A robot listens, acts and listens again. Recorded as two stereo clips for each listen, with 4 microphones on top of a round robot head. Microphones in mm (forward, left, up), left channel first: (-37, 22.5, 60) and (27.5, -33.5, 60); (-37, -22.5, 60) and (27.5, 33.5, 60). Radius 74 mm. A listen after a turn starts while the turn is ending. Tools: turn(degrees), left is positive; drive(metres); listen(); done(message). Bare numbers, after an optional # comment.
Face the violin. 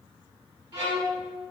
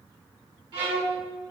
done("Facing the violin.")